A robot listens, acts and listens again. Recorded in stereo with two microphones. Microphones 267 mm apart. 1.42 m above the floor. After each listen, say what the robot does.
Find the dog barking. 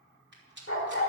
Turn 50° left.
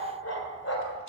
Turn 70° left.
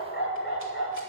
Turn 50° left.
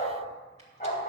Turn 30° left.
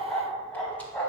Found it: a dog barking, straight ahead.